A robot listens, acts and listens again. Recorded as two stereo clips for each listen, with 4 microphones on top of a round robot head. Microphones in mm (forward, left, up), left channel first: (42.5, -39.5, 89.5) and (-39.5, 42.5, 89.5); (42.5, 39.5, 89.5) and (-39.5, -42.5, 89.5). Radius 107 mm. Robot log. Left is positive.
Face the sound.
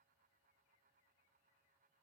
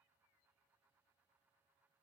cmd idle
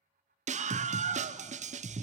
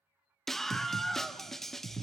note: The scream: 130° left.
cmd yaw +130
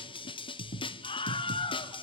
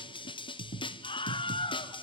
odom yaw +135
end: Found it: a scream, straight ahead, 1 to 2 m away.